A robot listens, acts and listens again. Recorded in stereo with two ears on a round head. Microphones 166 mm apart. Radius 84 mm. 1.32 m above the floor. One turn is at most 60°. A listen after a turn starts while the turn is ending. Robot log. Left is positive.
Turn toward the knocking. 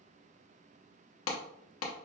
cmd idle
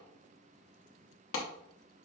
cmd idle
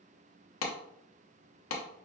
end: I can't make out knocking, only a clap.